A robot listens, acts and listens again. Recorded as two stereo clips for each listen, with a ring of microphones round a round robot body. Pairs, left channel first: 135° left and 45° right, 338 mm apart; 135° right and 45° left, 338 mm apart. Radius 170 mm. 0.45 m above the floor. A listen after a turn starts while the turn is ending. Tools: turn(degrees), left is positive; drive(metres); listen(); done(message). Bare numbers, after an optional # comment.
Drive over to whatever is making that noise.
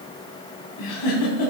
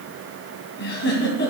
# The giggle: 165° left.
turn(165)
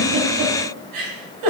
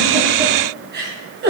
# The giggle is now 15° right.
turn(-15)
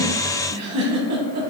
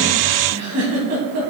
drive(1.0)
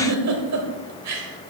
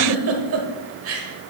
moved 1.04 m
drive(1.0)
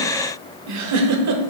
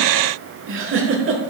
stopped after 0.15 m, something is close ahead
# The giggle is now 10° right.
turn(-10)
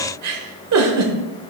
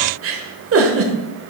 done("I am next to the giggle.")